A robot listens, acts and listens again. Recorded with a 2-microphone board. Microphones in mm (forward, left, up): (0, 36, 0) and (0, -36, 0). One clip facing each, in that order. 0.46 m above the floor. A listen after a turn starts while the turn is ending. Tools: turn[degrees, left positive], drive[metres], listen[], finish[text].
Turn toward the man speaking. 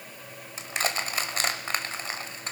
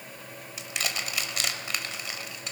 Action: listen[]
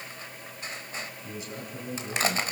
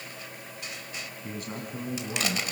Thought: The man speaking: about 50° right or 130° right.
Action: turn[-50]
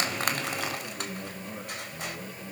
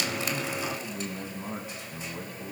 Thought: So it is at 75° right.
Action: turn[-75]
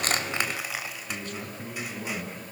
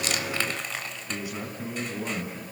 Thought: The man speaking is now 10° right.
Action: turn[-10]
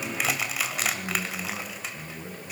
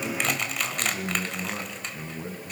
Action: finish[Found it: a man speaking, straight ahead, over 4 m away.]